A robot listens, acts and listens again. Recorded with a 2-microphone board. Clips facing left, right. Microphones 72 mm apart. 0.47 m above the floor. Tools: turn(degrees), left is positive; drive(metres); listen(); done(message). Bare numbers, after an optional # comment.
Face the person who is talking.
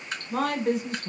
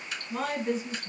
# The woman speaking: about 60° left or 120° left.
turn(60)
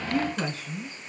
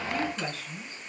# So it is at 30° left.
turn(30)
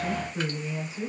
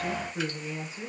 done("Found it: a woman speaking, straight ahead.")